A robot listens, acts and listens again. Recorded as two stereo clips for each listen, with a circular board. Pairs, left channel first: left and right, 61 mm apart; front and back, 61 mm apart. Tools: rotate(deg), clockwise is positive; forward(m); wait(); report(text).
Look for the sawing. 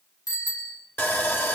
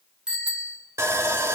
rotate(-140)
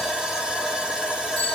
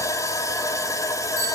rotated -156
rotate(15)
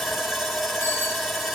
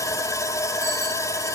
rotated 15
report("Facing the sawing.")